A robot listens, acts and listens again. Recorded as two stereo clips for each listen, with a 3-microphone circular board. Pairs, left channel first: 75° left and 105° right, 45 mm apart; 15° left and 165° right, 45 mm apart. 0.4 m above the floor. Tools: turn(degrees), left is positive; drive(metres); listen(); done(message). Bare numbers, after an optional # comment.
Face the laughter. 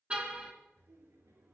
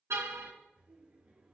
# The laughter: 105° right.
turn(-105)
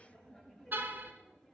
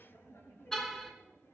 done("Found it: laughter, straight ahead, over 4 m away.")